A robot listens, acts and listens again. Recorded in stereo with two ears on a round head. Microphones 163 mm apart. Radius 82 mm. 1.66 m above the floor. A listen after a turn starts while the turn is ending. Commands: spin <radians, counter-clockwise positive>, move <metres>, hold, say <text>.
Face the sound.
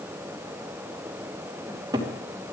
spin -0.35
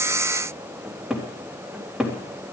say Found it: a cupboard door, straight ahead, 2 to 4 m away.